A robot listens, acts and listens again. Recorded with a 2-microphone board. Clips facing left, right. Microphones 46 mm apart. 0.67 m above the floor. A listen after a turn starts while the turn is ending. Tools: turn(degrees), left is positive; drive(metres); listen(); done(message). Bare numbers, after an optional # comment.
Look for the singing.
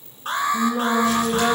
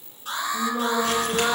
turn(30)
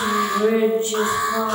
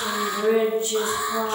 # So it is at 140° left.
turn(140)
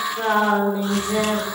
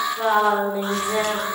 # The singing is now 15° right.
turn(-15)
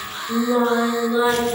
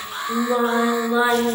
# The singing is now 25° right.
turn(-25)
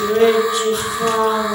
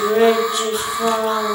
done("Found it: singing, straight ahead, 1 to 2 m away.")